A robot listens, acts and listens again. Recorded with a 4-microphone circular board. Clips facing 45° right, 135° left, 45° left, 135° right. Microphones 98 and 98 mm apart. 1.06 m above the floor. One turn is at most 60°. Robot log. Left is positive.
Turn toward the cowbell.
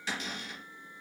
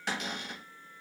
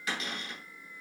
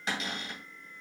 cmd idle
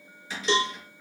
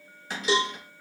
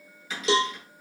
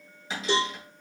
note: The cowbell: 50° left.
cmd yaw +50
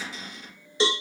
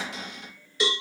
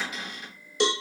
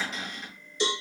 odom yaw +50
note: The cowbell is now 15° left.
cmd yaw +15
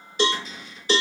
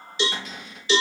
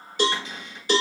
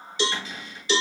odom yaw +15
end: Found it: a cowbell, straight ahead, under 1 m away.